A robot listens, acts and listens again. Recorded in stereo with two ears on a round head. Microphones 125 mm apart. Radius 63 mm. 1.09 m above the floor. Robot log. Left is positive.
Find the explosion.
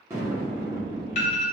note: The explosion: about 15° right or 165° right.
cmd yaw -15
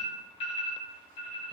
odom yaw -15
cmd idle
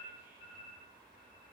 end: I heard an explosion, but can't make it out now. It was about straight ahead or 150° right.